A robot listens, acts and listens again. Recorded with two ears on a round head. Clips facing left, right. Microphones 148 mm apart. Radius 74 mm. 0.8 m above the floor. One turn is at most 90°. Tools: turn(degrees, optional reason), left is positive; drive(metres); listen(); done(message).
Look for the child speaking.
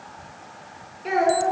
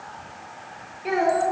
turn(degrees=-30)
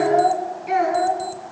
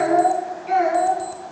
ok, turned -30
turn(degrees=10, reason="So it is at 10° left.")
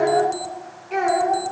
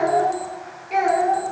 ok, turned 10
turn(degrees=-15, reason="The child speaking is now 15° right.")
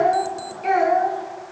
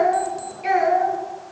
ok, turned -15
turn(degrees=-10, reason="The child speaking is now 10° right.")
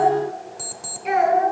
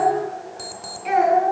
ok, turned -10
done("Facing the child speaking, over 4 m away.")